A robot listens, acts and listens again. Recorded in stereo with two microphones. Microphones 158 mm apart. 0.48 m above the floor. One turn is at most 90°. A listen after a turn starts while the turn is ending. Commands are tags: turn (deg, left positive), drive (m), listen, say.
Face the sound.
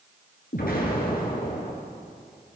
<turn deg="75"/>
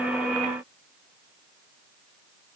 <listen/>
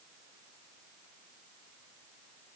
<say>I heard an explosion, but can't make it out now. It was about straight ahead or 30° left.</say>